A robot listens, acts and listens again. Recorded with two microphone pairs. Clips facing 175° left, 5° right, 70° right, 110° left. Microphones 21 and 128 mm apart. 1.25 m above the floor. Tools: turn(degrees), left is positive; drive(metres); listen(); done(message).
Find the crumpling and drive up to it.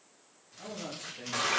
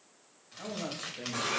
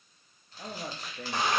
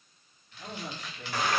turn(degrees=-20)
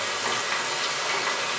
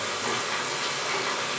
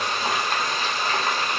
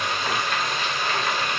listen()
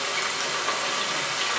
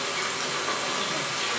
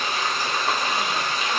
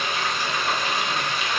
listen()
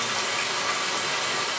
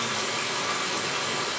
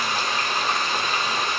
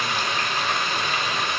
done("Facing where the crumpling came from. I can't hear it now. I did not reach it.")